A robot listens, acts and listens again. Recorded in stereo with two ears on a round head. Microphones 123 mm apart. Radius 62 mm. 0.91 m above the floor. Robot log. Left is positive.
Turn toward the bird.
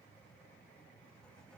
cmd idle
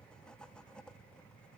cmd idle
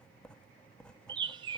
note: The bird: about 30° right or 150° right.
cmd yaw -30
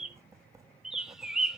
end: Found it: a bird, straight ahead.